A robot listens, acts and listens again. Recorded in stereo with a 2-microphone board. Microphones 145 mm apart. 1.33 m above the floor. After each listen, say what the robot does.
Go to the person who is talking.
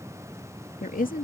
Turn 70° left.
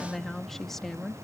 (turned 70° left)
Drive 1.0 m forward.
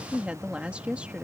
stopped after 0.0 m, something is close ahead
Turn 10° right.
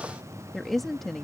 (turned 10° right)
Blocked. The woman speaking is further on, straight ahead.